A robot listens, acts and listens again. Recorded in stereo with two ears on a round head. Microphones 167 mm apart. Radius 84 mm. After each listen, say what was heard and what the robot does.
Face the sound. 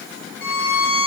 The violin: about 50° left or 130° left. Turn 50° left.
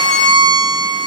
Found it: a violin, straight ahead.